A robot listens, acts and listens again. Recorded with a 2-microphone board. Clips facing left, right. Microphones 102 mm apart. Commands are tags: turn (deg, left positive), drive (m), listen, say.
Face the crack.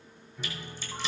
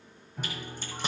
<turn deg="-55"/>
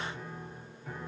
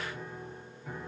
<listen/>
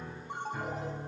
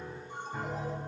<say>I heard a crack, but can't make it out now. It was about straight ahead or 70° right.</say>